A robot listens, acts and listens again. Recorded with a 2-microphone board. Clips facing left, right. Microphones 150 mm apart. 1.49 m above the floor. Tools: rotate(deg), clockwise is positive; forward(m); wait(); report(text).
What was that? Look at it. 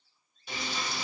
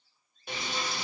rotate(55)
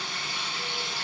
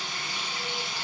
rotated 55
rotate(20)
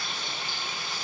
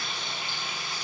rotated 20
report("Facing the frying, 1 to 2 m away.")